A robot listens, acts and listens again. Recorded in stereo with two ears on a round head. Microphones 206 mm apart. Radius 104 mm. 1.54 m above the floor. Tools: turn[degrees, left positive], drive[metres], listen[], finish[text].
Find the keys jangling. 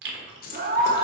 Thought: The keys jangling: about 40° left or 140° left.
Action: turn[40]
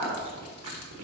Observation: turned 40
Action: listen[]
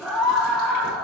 Action: listen[]
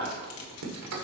Action: finish[I heard keys jangling, but can't make it out now. It was about straight ahead or 100° left.]